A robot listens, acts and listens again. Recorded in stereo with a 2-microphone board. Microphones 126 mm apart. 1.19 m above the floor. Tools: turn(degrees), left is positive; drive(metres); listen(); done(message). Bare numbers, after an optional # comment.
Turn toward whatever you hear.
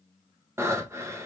# The breathing: about 20° right or 160° right.
turn(-20)
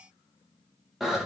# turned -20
done("Found it: breathing, straight ahead.")